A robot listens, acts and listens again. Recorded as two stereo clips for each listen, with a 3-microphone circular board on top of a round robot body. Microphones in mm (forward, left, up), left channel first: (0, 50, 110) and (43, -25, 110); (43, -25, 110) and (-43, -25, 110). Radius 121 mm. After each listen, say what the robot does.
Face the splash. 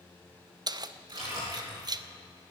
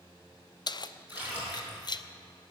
Turn 110° right.
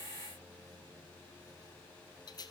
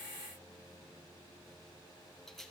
Facing where the splash came from. I can't hear it now.